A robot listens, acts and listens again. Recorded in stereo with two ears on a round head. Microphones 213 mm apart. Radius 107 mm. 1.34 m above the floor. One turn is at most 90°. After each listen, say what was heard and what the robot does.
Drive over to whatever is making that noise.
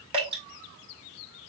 The dripping: about 25° right or 155° right. Turn 25° right.
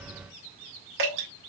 So it is at 130° right. Turn 90° right.
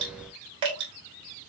The dripping is now 20° right. Turn 20° right.
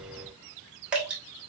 Drive 1.0 m forward.
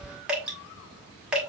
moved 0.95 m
Drive 1.0 m forward.
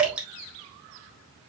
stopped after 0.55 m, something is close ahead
I am next to the dripping.